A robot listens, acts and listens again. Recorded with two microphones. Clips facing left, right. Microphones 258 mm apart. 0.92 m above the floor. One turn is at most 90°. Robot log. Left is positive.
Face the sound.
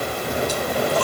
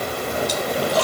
cmd yaw -90
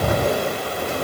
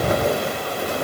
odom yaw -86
end: I heard a splash from this way, but can't make it out now.